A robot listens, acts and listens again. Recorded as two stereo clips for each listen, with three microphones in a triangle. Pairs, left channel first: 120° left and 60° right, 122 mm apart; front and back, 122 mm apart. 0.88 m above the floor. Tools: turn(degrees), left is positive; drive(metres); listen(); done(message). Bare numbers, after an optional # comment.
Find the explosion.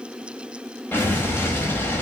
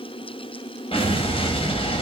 # The explosion: 45° left.
turn(45)
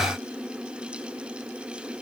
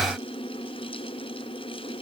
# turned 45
done("Facing where the explosion came from. I can't hear it now.")